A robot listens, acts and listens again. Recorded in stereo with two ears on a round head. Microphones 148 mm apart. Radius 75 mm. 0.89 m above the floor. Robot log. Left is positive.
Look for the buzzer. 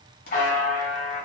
note: The buzzer: about 60° left or 120° left.
cmd yaw +60
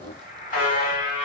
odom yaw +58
note: So it is at 55° left.
cmd yaw +55
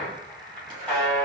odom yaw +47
end: Found it: a buzzer, straight ahead, 1 to 2 m away.